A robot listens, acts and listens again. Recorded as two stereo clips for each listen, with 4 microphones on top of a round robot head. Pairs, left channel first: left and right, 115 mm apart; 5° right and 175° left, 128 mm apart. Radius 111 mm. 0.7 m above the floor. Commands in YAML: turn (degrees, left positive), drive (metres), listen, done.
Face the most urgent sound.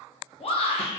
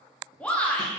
turn: 75
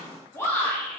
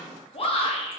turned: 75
turn: 25
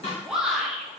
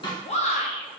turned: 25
done: "Facing the shout."